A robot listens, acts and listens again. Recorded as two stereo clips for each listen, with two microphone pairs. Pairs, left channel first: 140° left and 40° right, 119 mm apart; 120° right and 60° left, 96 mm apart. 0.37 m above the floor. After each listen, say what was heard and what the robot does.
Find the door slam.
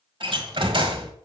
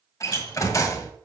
The door slam: 70° right. Turn 70° right.
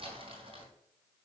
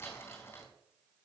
Facing where the door slam came from. I can't hear it now.